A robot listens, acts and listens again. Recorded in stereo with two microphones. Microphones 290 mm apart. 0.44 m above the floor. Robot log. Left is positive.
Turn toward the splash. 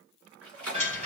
note: The splash: about 55° right or 125° right.
cmd yaw -55
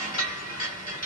cmd idle
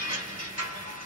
end: I heard a splash, but can't make it out now. It was about straight ahead or 70° right.